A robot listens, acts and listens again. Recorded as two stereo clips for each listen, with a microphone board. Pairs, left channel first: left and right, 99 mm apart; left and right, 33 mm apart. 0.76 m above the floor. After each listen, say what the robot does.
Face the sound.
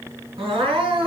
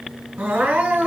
Turn 65° right.
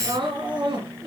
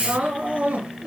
Turn 50° right.
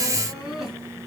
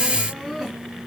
Found it: crying, straight ahead.